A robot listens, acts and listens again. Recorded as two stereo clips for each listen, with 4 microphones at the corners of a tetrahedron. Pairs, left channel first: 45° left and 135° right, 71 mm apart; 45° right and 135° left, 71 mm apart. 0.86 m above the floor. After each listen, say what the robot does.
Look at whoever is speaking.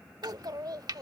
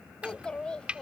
Turn 120° right.
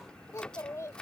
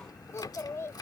Facing the child speaking.